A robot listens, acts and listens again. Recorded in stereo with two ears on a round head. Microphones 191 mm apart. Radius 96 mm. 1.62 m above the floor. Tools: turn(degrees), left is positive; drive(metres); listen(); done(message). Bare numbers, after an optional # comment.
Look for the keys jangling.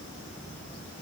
listen()
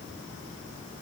listen()
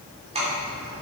# The keys jangling: about 30° right or 150° right.
turn(-30)
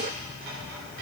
listen()
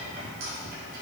# So it is at 130° right.
turn(-130)
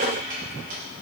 # The keys jangling is now 45° right.
turn(-45)
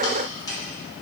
# The keys jangling is now 20° left.
turn(20)
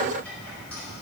listen()
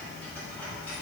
listen()
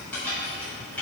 done("Facing the keys jangling, over 4 m away.")